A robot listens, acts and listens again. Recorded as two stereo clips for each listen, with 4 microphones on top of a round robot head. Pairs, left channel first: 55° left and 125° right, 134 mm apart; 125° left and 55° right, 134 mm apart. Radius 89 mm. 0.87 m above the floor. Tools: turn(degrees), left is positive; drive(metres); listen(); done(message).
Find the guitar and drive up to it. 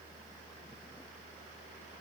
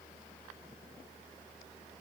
listen()
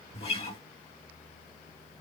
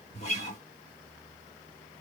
turn(degrees=90)
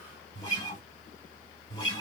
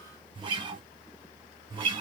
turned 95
drive(metres=1.0)
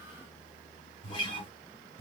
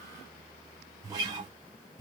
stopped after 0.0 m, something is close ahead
done("Blocked. The guitar is further on, straight ahead.")